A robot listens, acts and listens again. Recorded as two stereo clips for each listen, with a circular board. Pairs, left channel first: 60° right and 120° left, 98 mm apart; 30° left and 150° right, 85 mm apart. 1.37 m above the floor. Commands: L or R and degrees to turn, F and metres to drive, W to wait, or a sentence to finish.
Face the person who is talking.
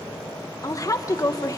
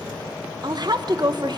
R115
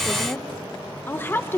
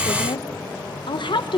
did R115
L10
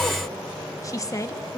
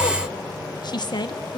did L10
Facing the woman speaking.